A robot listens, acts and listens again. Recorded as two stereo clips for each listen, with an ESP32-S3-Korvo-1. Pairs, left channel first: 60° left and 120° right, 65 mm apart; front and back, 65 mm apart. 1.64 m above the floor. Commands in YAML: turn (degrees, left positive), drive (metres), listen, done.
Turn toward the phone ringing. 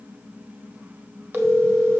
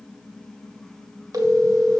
turn: -170
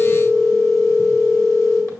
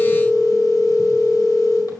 turn: 20
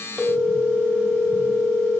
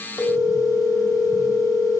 done: "Found it: a phone ringing, straight ahead."